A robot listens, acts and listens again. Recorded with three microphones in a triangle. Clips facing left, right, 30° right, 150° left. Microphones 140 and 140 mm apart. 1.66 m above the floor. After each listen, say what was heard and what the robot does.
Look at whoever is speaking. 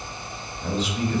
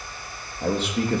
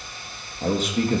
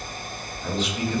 The man speaking: 65° right. Turn 65° right.
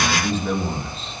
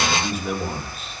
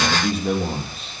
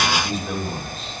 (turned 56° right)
The man speaking is now 10° right. Turn 10° right.
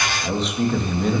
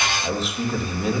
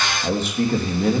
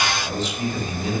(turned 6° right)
Facing the man speaking, 2 to 4 m away.